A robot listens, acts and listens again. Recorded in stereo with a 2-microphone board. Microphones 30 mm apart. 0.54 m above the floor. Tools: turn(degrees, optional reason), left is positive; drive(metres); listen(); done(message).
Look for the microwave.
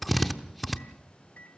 turn(degrees=60, reason="The microwave: about 60° left or 120° left.")
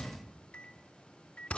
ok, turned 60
turn(degrees=45, reason="So it is at 45° left.")
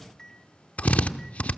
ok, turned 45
turn(degrees=15, reason="The microwave is now 15° left.")
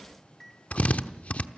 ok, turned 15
done("Found it: a microwave, straight ahead.")